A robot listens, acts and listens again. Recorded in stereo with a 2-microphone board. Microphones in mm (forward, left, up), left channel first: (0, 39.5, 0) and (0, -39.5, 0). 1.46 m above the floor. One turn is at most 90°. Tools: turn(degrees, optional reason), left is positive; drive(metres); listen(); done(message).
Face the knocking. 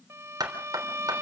turn(degrees=-55, reason="The knocking: about 55° right or 125° right.")
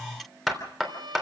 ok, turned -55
done("Found it: knocking, straight ahead.")